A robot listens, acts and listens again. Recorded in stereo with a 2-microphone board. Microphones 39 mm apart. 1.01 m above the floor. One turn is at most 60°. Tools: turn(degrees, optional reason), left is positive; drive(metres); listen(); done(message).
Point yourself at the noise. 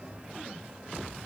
listen()
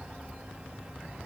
listen()
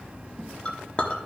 turn(degrees=30, reason="The clink: about 30° left or 150° left.")
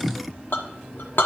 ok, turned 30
turn(degrees=60, reason="So it is at 120° left.")
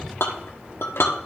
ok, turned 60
turn(degrees=60, reason="The clink is now 85° left.")
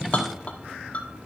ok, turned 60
turn(degrees=35, reason="The clink is now 35° left.")
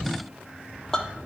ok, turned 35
turn(degrees=15, reason="The clink is now 15° left.")
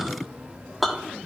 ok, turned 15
done("Found it: a clink, straight ahead, under 1 m away.")